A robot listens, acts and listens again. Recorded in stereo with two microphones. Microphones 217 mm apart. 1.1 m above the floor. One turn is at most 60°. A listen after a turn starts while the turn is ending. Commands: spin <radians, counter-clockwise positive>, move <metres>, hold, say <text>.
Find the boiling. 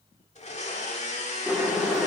spin -0.52
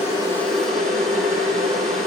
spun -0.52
spin -1.05
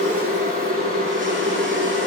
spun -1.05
spin -1.05
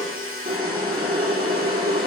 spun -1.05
spin -0.87
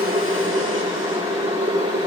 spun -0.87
spin -0.52
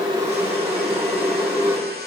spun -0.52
spin -0.17
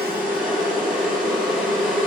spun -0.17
say Found it: boiling, straight ahead.